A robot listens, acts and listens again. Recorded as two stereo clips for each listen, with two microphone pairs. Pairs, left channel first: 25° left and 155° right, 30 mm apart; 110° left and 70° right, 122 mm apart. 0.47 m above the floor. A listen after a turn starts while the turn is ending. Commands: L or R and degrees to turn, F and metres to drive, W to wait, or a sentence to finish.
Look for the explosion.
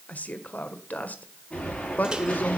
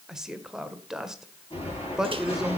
L75
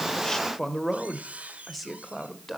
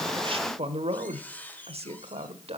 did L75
Facing where the explosion came from. I can't hear it now.